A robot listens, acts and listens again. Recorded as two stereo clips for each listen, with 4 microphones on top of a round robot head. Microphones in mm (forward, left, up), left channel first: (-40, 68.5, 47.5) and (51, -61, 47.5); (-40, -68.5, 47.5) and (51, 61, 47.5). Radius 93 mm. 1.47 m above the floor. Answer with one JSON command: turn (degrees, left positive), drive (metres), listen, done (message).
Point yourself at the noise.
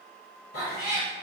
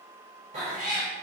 {"turn": 95}
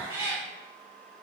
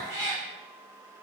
{"turn": 20}
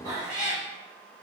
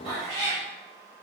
{"done": "Facing the cat meowing."}